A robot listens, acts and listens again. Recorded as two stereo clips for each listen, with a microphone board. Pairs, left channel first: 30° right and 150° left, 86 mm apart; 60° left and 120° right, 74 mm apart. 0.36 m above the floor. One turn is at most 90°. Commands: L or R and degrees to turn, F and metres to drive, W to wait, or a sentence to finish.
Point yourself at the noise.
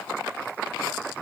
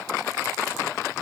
W
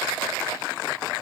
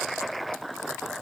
W
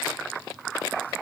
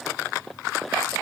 I can't make out anything to turn to.